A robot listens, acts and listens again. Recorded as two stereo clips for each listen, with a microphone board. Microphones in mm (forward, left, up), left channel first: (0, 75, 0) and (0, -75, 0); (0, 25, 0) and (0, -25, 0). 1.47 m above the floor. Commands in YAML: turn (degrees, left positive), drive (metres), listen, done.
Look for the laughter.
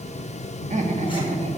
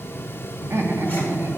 turn: -50
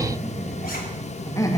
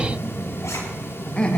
turn: 25
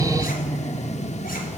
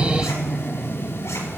turn: 25
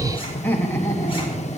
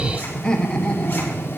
turn: 25
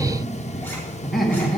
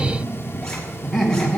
done: "Found it: laughter, straight ahead, 2 to 4 m away."